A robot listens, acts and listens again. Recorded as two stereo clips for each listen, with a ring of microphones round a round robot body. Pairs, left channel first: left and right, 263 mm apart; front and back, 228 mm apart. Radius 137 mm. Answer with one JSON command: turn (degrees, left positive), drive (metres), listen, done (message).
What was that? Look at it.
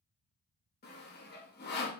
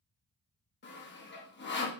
{"turn": 40}
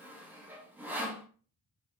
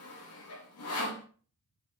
{"done": "Found it: sawing, straight ahead, 1 to 2 m away."}